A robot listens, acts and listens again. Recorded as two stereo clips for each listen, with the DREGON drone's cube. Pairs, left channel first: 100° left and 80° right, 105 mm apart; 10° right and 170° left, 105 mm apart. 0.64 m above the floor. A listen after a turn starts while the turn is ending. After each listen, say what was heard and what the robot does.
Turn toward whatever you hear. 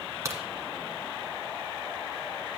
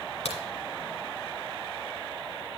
The crack: 15° right. Turn 15° right.
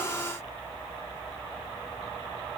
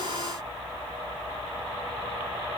Facing where the crack came from. I can't hear it now.